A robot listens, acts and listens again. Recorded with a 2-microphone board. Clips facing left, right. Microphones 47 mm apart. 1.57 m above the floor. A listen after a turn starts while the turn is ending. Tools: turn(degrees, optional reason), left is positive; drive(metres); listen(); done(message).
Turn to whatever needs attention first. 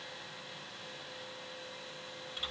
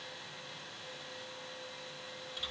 listen()
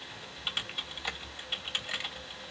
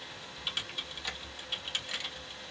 listen()
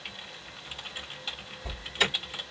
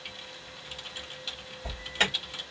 turn(degrees=-45, reason="The alarm: about 45° right or 135° right.")
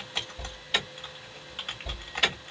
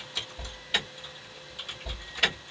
done("Found it: an alarm, straight ahead.")